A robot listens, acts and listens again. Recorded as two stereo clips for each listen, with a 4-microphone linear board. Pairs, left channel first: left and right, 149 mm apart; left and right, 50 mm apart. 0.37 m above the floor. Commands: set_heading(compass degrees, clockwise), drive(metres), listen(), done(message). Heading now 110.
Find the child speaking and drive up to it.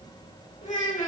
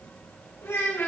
set_heading(50)
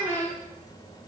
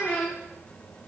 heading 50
set_heading(355)
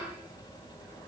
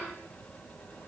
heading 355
listen()
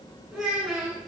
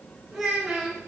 drive(1.0)
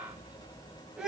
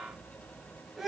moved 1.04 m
drive(1.0)
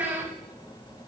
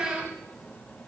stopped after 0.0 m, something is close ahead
set_heading(5)
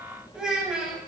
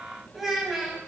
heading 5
done("I am next to the child speaking.")